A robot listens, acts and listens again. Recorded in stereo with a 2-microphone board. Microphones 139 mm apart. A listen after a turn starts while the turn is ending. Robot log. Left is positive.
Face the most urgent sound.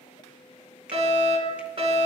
note: The fire alarm: about 55° right or 125° right.
cmd yaw -55
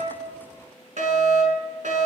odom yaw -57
note: So it is at 65° right.
cmd yaw -65
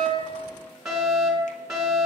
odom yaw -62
end: Found it: a fire alarm, straight ahead.